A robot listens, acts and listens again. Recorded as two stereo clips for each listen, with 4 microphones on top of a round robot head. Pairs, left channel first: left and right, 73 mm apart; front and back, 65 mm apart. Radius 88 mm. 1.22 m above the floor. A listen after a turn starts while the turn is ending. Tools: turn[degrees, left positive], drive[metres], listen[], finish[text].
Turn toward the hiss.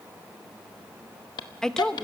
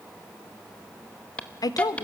Thought: The hiss: 70° left.
Action: turn[70]
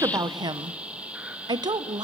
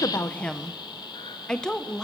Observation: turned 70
Thought: The hiss is now 15° right.
Action: turn[-15]
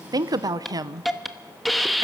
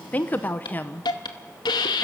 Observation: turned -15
Action: finish[Facing the hiss.]